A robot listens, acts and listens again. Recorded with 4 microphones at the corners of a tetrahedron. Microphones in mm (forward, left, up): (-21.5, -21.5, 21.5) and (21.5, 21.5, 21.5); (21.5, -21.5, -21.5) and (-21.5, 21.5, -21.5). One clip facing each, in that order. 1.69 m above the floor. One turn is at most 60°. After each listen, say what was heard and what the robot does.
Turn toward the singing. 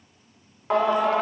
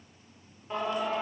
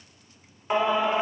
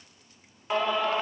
The singing: 120° right. Turn 60° right.
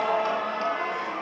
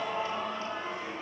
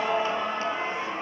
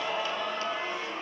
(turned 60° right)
The singing is now 105° right. Turn 60° right.
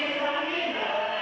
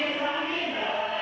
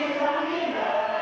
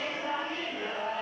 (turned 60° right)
The singing is now 45° right. Turn 45° right.
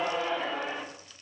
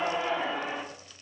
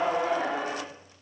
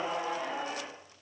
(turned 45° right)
The singing is now 30° right. Turn 30° right.
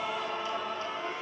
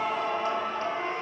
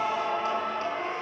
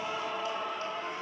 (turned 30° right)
Facing the singing.